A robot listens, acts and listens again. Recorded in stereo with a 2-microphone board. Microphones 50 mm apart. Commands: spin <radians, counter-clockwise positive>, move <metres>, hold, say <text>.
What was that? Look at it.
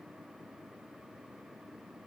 hold
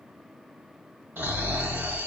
spin -0.87
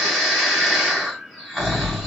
say Facing the snoring, 1 to 2 m away.